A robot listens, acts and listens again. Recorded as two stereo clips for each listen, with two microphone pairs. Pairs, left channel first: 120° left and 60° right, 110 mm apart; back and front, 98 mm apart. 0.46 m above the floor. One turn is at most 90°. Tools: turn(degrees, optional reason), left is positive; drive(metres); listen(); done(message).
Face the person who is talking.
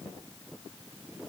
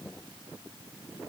listen()
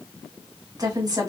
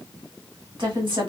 turn(degrees=-10, reason="The woman speaking: 10° right.")
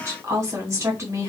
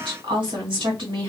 done("Facing the woman speaking.")